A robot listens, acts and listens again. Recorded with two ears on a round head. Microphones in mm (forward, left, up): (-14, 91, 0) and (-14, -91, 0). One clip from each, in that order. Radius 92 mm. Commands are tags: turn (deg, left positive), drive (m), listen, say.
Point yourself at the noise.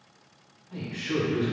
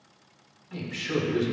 <turn deg="-65"/>
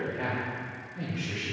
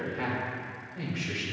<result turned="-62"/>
<turn deg="-55"/>
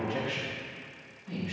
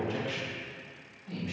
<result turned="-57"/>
<turn deg="-10"/>
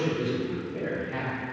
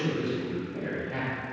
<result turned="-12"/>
<turn deg="-10"/>
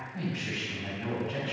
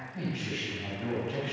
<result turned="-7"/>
<say>Facing the man speaking.</say>